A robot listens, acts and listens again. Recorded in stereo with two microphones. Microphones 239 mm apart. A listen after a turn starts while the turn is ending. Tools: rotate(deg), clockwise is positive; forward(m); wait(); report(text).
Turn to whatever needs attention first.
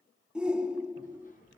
rotate(30)
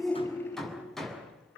rotate(-30)
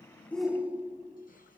report("Facing the shout, 2 to 4 m away.")